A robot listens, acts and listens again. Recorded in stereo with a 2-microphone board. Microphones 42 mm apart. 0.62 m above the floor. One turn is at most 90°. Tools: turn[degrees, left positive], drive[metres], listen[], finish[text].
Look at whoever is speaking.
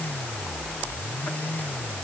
Action: listen[]
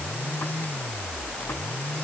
Action: listen[]
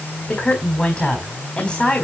Thought: The woman speaking: about 20° left or 160° left.
Action: turn[20]
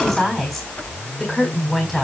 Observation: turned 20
Action: finish[Found it: a woman speaking, straight ahead.]